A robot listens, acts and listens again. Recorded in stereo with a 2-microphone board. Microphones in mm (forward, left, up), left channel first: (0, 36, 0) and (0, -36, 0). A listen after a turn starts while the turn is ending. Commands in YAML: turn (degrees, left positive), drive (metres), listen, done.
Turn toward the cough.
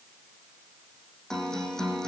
listen: true
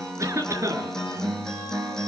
turn: -45
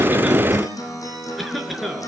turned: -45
done: "Facing the cough."